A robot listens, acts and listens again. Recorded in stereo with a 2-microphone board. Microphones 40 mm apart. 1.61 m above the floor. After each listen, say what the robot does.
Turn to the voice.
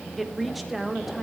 Turn 30° right.
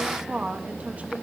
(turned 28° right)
Turn 145° right.
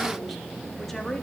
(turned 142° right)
Keep listening.
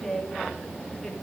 Turn 10° left.
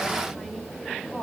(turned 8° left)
Keep listening.
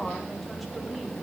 Keep listening.
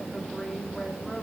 Facing where the woman speaking came from. I can't hear it now.